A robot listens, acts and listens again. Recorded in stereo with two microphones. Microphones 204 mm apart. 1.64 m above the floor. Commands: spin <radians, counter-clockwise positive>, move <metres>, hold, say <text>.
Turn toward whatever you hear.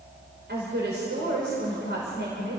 spin -1.05
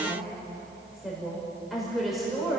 say Facing the woman speaking.